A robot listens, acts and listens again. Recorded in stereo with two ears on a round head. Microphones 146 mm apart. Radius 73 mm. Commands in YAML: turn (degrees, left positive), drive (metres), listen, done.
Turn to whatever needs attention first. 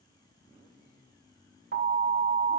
turn: -70
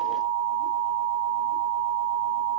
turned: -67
turn: -35
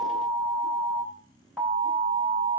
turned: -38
done: "Found it: an alarm, straight ahead."